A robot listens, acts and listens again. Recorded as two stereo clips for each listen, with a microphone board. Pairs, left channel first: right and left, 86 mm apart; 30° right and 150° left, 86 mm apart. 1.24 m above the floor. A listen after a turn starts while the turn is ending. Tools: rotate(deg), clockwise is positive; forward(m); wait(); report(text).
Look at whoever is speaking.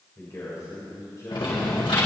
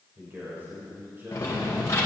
rotate(145)
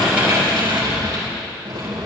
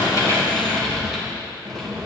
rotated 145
wait()
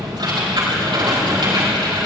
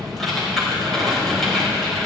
wait()
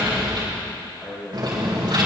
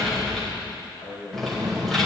rotate(25)
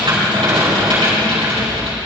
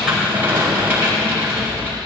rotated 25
wait()
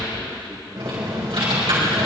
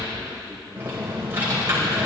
wait()
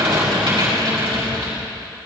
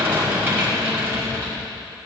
report("I heard a man speaking from this way, but can't make it out now.")